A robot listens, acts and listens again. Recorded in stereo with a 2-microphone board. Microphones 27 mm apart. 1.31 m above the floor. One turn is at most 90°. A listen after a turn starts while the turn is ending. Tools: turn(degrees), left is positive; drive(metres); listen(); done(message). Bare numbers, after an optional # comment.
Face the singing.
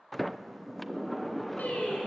turn(90)
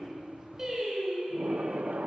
# So it is at 20° right.
turn(-20)
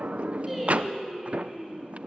done("Facing the singing, over 4 m away.")